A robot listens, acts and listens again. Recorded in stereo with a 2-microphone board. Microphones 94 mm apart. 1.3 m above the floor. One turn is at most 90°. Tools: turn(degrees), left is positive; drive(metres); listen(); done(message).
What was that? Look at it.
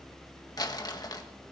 turn(degrees=45)
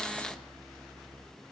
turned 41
listen()
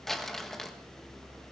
done("Found it: crumpling, straight ahead, 1 to 2 m away.")